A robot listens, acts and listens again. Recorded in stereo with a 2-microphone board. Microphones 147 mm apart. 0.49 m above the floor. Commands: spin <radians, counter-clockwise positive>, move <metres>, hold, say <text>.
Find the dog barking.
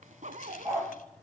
spin -0.26
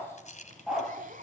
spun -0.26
spin -0.52
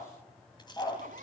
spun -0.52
spin 0.35
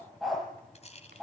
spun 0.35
say Found it: a dog barking, straight ahead, over 4 m away.